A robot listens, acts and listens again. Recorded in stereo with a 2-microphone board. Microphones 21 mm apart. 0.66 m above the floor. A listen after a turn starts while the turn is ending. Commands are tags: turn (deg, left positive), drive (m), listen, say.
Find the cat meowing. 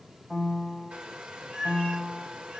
<turn deg="-65"/>
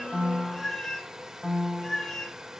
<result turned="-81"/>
<turn deg="40"/>
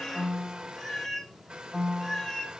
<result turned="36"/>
<turn deg="15"/>
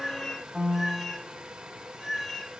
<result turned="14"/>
<say>Facing the cat meowing, 2 to 4 m away.</say>